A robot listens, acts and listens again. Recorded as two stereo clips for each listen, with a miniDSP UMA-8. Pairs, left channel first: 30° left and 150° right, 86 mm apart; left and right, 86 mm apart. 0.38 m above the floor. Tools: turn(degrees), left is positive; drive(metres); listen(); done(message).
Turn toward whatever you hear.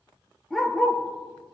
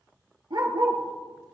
turn(degrees=-50)
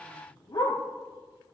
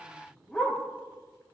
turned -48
turn(degrees=15)
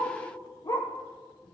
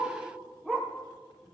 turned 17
done("Found it: a dog barking, straight ahead, 2 to 4 m away.")